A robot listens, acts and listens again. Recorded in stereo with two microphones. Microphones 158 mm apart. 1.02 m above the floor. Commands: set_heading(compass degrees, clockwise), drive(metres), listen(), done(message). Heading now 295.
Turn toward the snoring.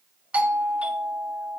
listen()
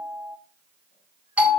listen()
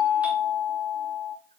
done("I can't make out snoring, only a doorbell.")